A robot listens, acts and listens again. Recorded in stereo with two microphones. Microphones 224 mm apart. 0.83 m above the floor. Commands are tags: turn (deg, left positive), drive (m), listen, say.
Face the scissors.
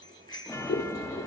<turn deg="75"/>
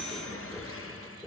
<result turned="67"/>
<turn deg="15"/>
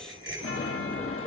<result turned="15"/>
<listen/>
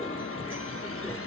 <say>Facing the scissors, 2 to 4 m away.</say>